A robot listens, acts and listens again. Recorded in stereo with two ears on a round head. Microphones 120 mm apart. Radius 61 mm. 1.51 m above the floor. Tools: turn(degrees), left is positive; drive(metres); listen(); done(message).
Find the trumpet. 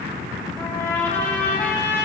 turn(degrees=15)
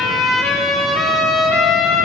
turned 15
done("Found it: a trumpet, straight ahead, 1 to 2 m away.")